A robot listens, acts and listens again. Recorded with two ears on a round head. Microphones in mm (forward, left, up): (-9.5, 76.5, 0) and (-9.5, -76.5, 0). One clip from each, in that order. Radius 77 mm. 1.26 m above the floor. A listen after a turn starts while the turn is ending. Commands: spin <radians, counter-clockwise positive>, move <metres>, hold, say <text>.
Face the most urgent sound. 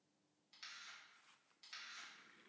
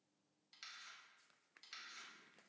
hold
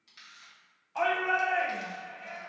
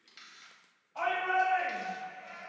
spin 0.87
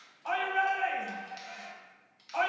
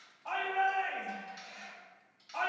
spin 1.40
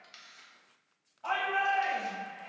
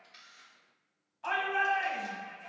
spin -0.61
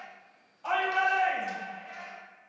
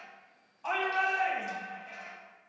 say Found it: a shout, straight ahead, 1 to 2 m away.